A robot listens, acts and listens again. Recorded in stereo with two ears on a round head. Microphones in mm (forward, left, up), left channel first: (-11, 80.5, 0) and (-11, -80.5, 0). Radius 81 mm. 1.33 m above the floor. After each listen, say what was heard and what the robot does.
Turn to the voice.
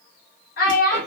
The child speaking: about 55° left or 125° left. Turn 55° left.
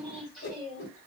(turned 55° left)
Facing the child speaking.